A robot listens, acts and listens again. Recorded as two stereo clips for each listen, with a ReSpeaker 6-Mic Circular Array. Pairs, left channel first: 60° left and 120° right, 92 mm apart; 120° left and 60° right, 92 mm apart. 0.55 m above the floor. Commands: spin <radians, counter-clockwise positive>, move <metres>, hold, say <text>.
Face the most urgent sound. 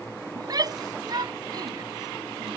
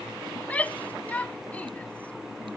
spin -2.88
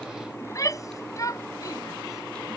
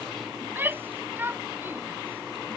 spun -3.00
say Found it: a shout, straight ahead.